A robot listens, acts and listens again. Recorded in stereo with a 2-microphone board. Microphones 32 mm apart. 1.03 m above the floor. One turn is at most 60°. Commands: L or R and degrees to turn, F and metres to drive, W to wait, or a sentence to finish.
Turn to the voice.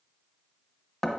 W
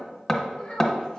L35
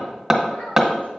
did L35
W
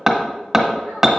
W
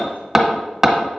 I heard a child speaking, but can't make it out now. It was about straight ahead or 110° left.